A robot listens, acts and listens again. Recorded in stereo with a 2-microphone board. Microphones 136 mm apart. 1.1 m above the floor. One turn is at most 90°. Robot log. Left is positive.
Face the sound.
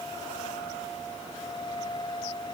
cmd idle
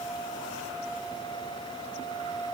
cmd idle
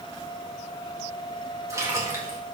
note: The splash: about 20° right or 160° right.
cmd yaw -20
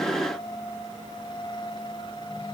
cmd idle
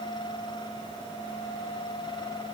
end: I heard a splash, but can't make it out now. It was about straight ahead or 140° right.